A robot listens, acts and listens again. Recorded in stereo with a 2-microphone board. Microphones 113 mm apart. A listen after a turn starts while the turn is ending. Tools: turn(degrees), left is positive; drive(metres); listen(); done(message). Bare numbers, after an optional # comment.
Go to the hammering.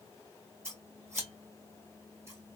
listen()
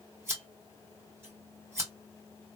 listen()
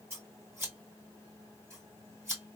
done("I can't make out hammering to turn to.")